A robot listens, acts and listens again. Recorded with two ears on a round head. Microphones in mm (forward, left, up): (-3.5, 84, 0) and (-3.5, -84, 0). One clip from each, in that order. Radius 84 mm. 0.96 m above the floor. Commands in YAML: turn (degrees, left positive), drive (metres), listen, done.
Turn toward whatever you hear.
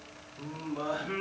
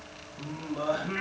turn: -20
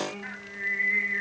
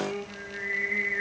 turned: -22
done: "Facing the singing."